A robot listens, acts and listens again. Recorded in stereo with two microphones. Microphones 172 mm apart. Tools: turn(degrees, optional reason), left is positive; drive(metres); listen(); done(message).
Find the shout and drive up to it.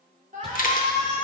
turn(degrees=-45, reason="The shout: about 45° right or 135° right.")
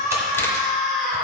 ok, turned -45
drive(metres=1.0)
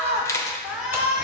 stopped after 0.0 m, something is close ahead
done("Blocked. The shout is further on, straight ahead.")